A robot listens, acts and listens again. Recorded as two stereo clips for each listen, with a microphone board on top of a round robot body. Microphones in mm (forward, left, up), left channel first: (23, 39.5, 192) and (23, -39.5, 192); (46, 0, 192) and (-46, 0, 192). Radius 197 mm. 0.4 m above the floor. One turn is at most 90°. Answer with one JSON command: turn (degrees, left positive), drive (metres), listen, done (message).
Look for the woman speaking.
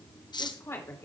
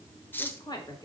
{"turn": 35}
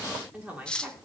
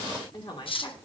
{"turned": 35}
{"turn": -20}
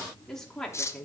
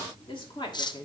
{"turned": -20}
{"turn": 10}
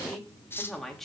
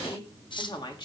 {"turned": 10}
{"done": "Facing the woman speaking."}